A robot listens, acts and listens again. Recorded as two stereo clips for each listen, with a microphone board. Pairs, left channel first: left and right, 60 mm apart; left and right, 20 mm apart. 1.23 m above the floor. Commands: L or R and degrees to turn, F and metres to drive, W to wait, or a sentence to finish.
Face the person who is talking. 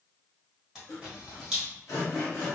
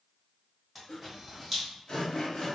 W
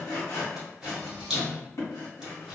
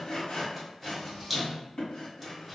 W
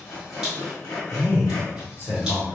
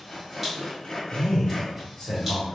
L45
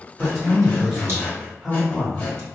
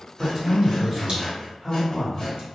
Found it: a man speaking, straight ahead.